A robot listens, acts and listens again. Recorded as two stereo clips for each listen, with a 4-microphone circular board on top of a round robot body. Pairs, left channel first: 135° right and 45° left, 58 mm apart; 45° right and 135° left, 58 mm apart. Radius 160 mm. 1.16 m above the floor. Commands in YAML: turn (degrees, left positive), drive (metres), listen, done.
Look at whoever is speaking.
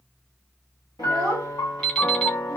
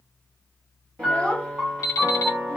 turn: 25
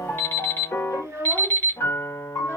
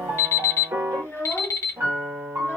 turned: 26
done: "Facing the child speaking, under 1 m away."